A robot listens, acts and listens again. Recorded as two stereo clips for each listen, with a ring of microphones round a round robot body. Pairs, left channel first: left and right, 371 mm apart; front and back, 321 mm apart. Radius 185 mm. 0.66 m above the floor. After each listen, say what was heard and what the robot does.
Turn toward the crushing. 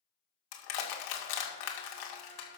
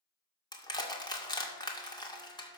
The crushing: 75° left. Turn 75° left.
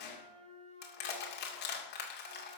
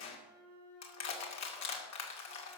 The crushing is now 30° left. Turn 30° left.
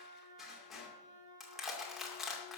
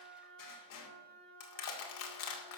Facing the crushing, 2 to 4 m away.